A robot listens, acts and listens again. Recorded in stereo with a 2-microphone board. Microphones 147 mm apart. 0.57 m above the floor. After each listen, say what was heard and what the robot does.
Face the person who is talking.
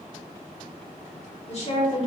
The woman speaking: about 50° left or 130° left. Turn 50° left.
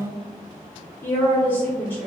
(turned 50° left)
So it is at 15° left. Turn 15° left.
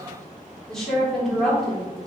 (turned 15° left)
Found it: a woman speaking, straight ahead.